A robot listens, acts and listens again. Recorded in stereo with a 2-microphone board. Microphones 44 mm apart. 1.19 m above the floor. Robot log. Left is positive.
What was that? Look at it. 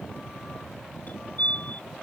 note: The fire alarm: about 35° left or 145° left.
cmd yaw +35
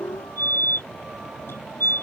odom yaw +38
note: So it is at 105° left.
cmd yaw +105
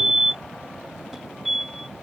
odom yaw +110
end: Found it: a fire alarm, straight ahead.